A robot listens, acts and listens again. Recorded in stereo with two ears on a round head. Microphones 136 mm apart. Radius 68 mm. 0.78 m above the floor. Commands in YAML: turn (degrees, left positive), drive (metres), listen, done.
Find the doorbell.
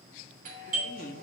turn: -55
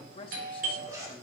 turn: -65
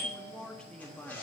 turn: -30
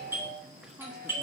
turn: -15
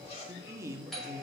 done: "Found it: a doorbell, straight ahead."